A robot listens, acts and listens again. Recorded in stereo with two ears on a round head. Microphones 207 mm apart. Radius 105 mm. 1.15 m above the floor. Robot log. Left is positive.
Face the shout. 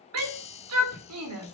cmd yaw -90
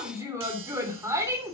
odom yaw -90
note: So it is at 15° right.
cmd yaw -15
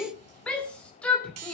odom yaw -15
end: Facing the shout.